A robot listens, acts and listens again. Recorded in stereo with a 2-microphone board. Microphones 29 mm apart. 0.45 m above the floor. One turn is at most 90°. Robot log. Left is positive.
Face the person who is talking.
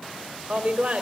note: The woman speaking: about 40° right or 140° right.
cmd yaw -40
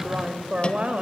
note: So it is at 130° right.
cmd yaw -90
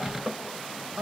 note: The woman speaking is now 45° right.
cmd yaw -45
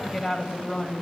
end: Facing the woman speaking.